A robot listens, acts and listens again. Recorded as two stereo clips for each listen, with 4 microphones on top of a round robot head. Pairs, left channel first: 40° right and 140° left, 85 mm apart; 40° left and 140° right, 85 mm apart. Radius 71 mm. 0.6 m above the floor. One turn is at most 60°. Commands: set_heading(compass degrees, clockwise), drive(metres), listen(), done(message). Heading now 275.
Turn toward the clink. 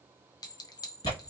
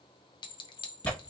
done("Found it: a clink, straight ahead.")